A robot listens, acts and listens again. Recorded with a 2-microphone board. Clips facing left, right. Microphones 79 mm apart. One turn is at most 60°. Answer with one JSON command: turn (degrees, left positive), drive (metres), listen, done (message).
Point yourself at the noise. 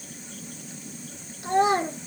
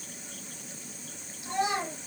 {"turn": 55}
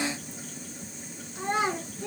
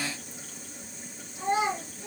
{"turn": 55}
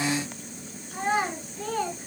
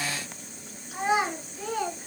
{"turn": -10}
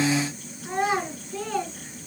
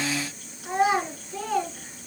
{"done": "Facing the child speaking."}